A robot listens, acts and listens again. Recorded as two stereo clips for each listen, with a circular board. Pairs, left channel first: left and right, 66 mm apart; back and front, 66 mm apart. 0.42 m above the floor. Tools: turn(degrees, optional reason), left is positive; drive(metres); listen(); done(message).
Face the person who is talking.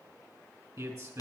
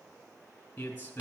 turn(degrees=-115, reason="The man speaking: 115° right.")
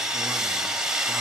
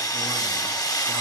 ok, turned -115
listen()
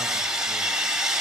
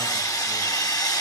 listen()
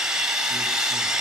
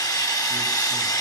done("I heard a man speaking from this way, but can't make it out now.")